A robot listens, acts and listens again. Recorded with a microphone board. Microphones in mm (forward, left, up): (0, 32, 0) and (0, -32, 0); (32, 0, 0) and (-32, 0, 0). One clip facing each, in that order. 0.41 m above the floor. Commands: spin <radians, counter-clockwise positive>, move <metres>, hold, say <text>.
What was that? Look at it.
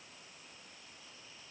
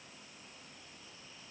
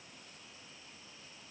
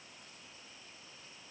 hold
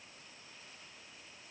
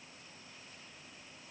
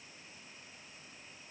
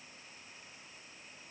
hold
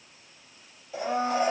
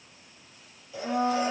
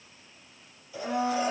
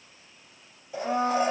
spin 2.62
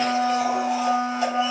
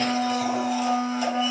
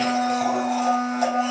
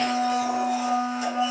spin 0.61
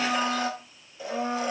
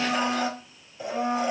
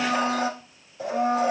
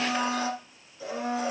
say Facing the blender, 2 to 4 m away.